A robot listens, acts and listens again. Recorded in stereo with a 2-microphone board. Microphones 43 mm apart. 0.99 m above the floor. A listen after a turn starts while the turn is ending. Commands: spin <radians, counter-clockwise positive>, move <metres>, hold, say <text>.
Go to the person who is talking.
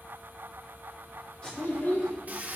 spin 1.22
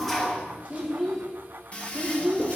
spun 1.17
move 1.0
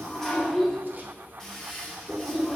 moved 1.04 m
move 1.0
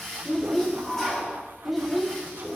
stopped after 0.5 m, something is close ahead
say Arrived at the child speaking, straight ahead.